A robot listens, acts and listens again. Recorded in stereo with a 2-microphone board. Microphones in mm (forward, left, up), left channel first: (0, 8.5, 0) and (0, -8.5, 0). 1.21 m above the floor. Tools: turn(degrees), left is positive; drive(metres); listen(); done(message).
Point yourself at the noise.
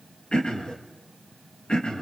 turn(degrees=60)
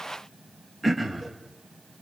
done("Found it: throat clearing, straight ahead.")